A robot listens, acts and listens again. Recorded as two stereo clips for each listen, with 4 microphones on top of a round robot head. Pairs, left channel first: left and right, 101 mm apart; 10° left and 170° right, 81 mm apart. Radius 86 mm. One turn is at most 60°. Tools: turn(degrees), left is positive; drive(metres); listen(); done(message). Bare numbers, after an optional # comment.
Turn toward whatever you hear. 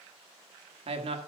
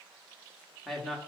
# The man speaking: 80° right.
turn(-60)
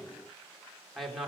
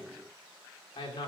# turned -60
done("Facing the man speaking.")